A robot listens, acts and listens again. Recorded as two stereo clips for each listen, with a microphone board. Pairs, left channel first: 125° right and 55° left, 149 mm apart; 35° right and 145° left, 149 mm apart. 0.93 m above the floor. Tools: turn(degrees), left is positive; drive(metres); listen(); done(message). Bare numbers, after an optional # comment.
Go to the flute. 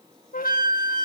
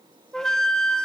# The flute: 120° right.
turn(-120)
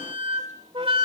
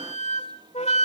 drive(1.0)
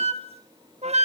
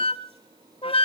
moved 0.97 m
# The flute is now 15° left.
turn(15)
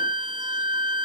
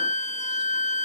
drive(1.0)
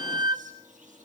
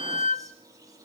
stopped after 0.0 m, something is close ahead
done("I am next to the flute.")